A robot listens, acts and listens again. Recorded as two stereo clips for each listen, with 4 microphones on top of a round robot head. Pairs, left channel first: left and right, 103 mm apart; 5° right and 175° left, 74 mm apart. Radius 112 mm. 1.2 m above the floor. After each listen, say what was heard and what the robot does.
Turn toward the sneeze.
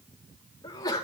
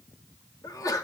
The sneeze: 30° left. Turn 30° left.
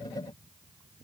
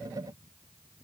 Facing where the sneeze came from. I can't hear it now.